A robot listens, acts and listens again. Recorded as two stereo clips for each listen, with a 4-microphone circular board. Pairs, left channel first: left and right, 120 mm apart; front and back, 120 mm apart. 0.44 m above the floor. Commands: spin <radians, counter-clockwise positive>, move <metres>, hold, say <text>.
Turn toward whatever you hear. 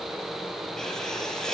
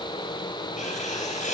say Facing the writing, 2 to 4 m away.